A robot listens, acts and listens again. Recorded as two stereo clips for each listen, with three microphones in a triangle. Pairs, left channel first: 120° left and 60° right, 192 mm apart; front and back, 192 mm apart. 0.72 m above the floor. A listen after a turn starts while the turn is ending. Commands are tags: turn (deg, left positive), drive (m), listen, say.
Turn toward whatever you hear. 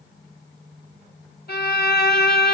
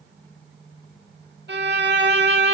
<turn deg="155"/>
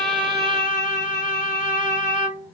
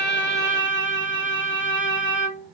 <say>Found it: a violin, straight ahead, 1 to 2 m away.</say>